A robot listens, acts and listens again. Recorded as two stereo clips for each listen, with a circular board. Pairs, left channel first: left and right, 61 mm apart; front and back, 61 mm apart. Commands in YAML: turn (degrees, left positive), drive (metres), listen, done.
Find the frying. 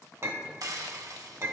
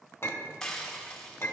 turn: -80
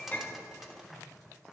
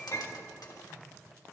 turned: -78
done: "Found it: frying, straight ahead."